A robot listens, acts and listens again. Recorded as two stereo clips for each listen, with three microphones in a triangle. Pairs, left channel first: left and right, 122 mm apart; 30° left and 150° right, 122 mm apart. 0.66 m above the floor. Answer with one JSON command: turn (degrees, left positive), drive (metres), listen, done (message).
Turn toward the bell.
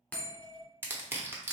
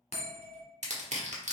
{"turn": 10}
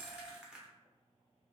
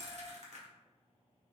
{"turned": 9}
{"listen": true}
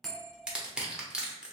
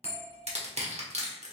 {"done": "Facing the bell."}